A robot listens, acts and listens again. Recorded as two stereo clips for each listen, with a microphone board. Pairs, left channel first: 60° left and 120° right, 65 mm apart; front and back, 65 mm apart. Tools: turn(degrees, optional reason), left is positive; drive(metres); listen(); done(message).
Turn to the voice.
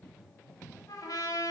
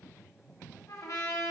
listen()
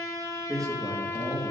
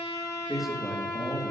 turn(degrees=-95, reason="The man speaking: 95° right.")
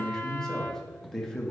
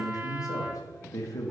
turn(degrees=-20, reason="The man speaking is now 20° right.")
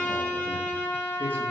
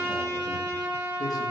listen()
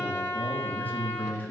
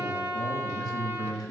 done("Facing the man speaking, 1 to 2 m away.")